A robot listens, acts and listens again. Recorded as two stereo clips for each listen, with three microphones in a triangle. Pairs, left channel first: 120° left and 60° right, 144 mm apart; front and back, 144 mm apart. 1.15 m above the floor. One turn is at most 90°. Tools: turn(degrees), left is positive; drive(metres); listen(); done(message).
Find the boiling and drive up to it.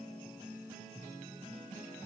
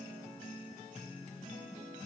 listen()
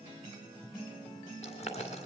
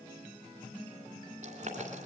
turn(degrees=90)
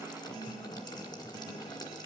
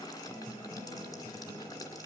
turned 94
turn(degrees=60)
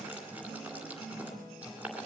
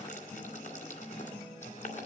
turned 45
turn(degrees=15)
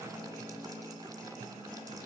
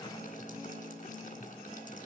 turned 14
listen()
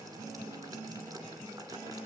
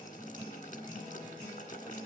drive(metres=1.0)
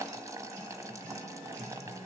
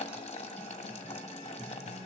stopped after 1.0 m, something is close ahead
done("Arrived at the boiling, straight ahead.")